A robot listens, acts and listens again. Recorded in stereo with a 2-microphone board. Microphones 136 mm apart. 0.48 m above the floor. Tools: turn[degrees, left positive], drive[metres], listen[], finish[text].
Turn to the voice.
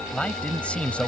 Action: turn[30]
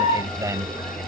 Thought: So it is at 25° right.
Action: turn[-25]
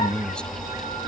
Action: finish[Found it: a man speaking, straight ahead.]